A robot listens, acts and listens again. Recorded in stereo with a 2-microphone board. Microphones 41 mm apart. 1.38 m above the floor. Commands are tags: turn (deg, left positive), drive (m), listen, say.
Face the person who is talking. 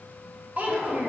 <turn deg="-40"/>
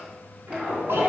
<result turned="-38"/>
<listen/>
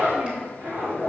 <listen/>
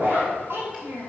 <turn deg="-100"/>
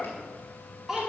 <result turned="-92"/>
<turn deg="-10"/>
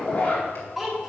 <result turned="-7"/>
<say>Found it: a child speaking, straight ahead, 1 to 2 m away.</say>